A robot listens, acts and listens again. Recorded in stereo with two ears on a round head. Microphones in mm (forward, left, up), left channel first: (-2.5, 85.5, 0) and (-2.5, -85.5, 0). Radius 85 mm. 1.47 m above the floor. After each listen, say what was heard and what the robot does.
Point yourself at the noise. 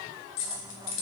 The keys jangling: about 70° left or 110° left. Turn 70° left.
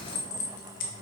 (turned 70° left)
So it is at 45° left. Turn 45° left.
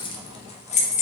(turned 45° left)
The keys jangling is now 40° left. Turn 40° left.
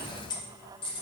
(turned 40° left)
The keys jangling is now 25° left. Turn 25° left.
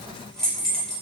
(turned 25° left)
Found it: keys jangling, straight ahead, 1 to 2 m away.